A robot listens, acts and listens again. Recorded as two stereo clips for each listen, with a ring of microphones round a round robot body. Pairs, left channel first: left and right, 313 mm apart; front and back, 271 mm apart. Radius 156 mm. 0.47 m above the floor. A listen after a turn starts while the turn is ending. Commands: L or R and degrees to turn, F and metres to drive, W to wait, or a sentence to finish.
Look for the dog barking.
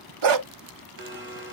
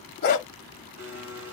R60
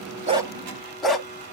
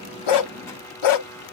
Found it: a dog barking, straight ahead, 1 to 2 m away.